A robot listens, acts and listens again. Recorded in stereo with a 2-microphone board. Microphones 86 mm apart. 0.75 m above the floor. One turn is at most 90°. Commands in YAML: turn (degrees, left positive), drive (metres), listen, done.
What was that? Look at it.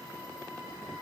listen: true
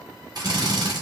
turn: -50
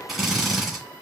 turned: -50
done: "Facing the drill."